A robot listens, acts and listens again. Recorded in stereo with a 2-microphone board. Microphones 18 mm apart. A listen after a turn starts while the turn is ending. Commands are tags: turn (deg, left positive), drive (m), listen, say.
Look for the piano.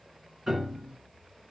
<turn deg="-25"/>
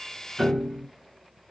<say>Found it: a piano, straight ahead.</say>